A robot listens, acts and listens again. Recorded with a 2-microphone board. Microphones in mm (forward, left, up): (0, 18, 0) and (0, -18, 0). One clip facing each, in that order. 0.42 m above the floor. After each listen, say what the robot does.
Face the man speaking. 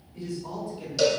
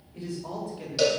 Turn 60° right.
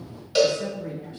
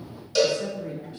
Found it: a man speaking, straight ahead.